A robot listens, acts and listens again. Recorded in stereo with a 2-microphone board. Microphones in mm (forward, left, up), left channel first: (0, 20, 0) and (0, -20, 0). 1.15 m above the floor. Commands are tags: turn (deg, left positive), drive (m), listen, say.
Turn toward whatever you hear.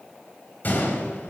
<turn deg="45"/>
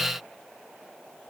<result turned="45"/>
<listen/>
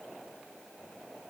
<say>I heard a gunshot, but can't make it out now. It was about straight ahead or 90° left.</say>